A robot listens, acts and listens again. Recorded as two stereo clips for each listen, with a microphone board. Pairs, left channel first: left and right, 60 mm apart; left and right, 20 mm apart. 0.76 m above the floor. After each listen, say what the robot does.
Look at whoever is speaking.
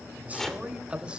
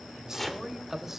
Turn 20° right.
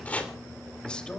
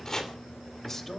Turn 15° left.
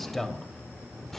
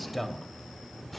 Found it: a man speaking, straight ahead, 2 to 4 m away.